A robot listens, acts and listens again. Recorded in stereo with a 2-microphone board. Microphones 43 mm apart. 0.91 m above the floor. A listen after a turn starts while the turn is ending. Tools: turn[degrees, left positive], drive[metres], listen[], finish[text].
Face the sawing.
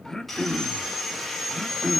Action: turn[30]
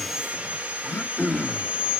Thought: So it is at 25° right.
Action: turn[-25]
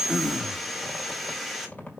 Action: finish[Found it: sawing, straight ahead, 1 to 2 m away.]